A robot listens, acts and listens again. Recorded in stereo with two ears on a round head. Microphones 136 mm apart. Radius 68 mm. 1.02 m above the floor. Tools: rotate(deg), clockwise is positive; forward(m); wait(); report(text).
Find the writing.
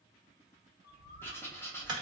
rotate(-30)
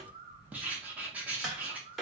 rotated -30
rotate(10)
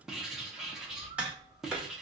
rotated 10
report("Facing the writing.")